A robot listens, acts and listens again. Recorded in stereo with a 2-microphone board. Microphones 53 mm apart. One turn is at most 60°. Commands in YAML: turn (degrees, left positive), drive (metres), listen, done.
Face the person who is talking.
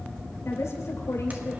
turn: 60
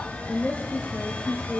turn: 30
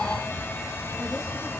listen: true
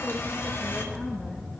listen: true
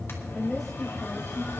done: "Facing the woman speaking, over 4 m away."